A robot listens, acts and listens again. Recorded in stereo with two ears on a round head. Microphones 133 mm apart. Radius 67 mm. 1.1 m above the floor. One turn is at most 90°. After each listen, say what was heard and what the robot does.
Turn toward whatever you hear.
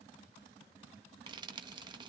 The frying: about 30° right or 150° right. Turn 30° right.
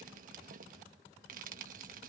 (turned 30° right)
So it is at 115° right. Turn 90° right.
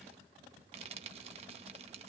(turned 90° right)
The frying is now 40° right. Turn 40° right.
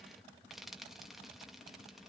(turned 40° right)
Found it: frying, straight ahead.